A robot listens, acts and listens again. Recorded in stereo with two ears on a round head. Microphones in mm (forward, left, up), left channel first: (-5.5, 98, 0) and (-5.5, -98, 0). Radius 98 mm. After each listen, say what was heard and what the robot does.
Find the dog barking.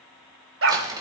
The dog barking: about 65° right or 115° right. Turn 65° right.
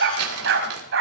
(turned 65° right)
So it is at 60° right. Turn 60° right.
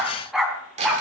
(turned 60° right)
Found it: a dog barking, straight ahead, 2 to 4 m away.